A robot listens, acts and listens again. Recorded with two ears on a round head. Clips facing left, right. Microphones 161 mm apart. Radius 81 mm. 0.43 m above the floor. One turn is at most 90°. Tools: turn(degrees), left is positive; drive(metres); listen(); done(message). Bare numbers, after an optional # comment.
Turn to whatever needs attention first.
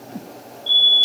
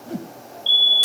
# The fire alarm: about 40° right or 140° right.
turn(-40)
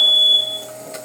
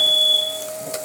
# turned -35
# So it is at 15° right.
turn(-15)
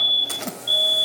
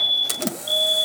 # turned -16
done("Facing the fire alarm.")